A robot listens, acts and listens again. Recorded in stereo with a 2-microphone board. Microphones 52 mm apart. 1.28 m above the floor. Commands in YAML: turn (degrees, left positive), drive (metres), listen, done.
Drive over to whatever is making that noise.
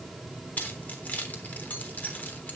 turn: 35
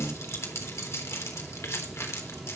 turn: 110
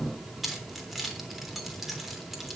drive: 1.0
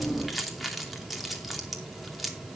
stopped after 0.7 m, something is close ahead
done: "Something is in my way. I am facing the keys jangling but have not reached it."